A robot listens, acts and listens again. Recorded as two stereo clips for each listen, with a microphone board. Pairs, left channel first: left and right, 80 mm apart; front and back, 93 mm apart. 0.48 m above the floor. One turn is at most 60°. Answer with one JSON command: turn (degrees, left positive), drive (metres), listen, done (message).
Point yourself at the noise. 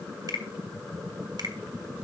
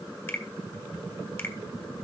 {"turn": -60}
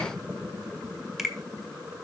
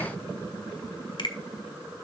{"done": "Facing the finger snap."}